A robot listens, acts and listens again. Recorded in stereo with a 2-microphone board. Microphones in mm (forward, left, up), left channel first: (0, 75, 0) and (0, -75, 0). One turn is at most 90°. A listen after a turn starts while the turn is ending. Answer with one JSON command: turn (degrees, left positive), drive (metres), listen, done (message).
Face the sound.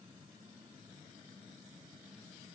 {"listen": true}
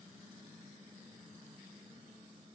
{"listen": true}
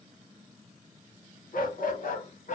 {"turn": 60}
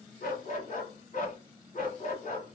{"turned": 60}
{"turn": 60}
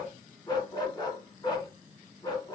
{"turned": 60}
{"turn": 30}
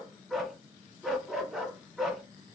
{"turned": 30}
{"done": "Facing the dog barking."}